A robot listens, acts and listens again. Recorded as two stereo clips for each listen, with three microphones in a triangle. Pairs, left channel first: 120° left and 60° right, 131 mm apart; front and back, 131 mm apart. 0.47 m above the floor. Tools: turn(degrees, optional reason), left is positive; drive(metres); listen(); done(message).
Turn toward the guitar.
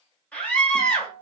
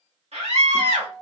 turn(degrees=-85, reason="The guitar: 85° right.")
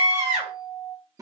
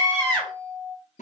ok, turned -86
done("Found it: a guitar, straight ahead.")